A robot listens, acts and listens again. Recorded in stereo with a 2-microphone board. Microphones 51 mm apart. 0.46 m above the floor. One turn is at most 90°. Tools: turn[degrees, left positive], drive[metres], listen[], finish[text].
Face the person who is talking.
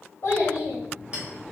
Thought: The child speaking: about 60° left or 120° left.
Action: turn[60]
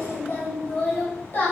Thought: So it is at 55° left.
Action: turn[55]
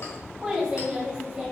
Thought: The child speaking is now 15° right.
Action: turn[-15]
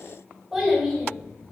Action: finish[Found it: a child speaking, straight ahead.]